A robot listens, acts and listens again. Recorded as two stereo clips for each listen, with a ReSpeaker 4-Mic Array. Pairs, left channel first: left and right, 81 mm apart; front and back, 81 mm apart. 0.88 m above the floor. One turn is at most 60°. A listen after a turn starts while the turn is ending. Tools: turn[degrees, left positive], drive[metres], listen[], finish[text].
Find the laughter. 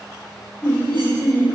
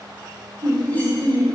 Thought: The laughter: 150° left.
Action: turn[60]
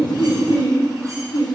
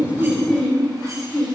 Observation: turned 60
Thought: The laughter is now 75° left.
Action: turn[60]
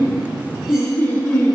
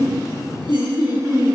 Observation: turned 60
Thought: The laughter is now 20° left.
Action: turn[20]
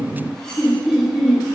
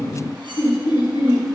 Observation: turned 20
Action: finish[Facing the laughter.]